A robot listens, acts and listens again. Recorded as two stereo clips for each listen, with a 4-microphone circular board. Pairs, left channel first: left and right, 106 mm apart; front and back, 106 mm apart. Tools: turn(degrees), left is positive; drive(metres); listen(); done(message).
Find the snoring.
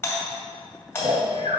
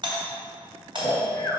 turn(degrees=-70)
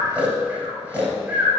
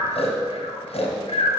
turn(degrees=-15)
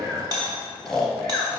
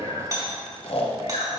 done("Facing the snoring.")